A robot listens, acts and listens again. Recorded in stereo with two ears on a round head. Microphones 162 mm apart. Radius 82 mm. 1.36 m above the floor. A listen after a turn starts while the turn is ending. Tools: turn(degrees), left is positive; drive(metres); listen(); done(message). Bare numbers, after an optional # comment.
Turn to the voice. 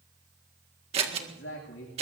turn(90)
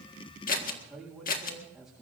done("Facing the man speaking.")